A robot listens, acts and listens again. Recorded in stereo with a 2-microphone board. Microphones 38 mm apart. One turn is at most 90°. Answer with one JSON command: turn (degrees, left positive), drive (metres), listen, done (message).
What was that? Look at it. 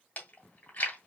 {"turn": 50}
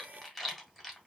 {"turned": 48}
{"done": "Facing the chewing."}